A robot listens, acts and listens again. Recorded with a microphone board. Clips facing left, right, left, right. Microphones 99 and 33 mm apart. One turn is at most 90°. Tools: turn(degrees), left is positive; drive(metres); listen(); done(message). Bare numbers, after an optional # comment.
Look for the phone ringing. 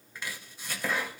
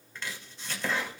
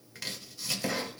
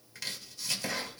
listen()
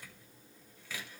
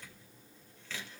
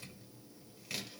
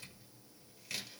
listen()
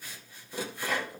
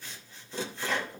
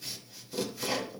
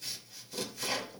done("I can't make out a phone ringing to turn to.")